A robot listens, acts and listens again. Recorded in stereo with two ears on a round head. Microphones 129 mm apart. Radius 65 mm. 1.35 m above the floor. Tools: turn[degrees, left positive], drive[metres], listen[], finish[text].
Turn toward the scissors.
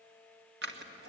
Action: turn[-90]
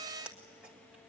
Action: finish[Found it: scissors, straight ahead.]